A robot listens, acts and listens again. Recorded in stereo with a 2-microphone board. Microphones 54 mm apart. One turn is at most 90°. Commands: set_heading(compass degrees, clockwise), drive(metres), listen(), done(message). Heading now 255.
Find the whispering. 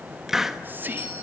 set_heading(290)
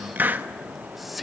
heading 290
done("Found it: whispering, straight ahead, under 1 m away.")